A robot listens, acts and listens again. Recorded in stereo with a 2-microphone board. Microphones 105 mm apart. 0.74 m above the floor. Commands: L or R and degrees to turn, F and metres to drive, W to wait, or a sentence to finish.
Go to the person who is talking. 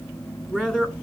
L30
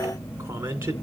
R25
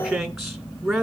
F1.0
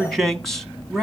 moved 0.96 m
F1.0
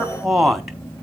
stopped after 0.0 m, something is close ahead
I am next to the man speaking.